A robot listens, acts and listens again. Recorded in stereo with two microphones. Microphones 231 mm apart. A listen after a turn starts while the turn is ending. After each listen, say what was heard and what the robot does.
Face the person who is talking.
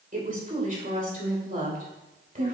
The woman speaking: about 35° right or 145° right. Turn 35° right.
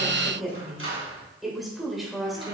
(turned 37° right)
Found it: a woman speaking, straight ahead, 2 to 4 m away.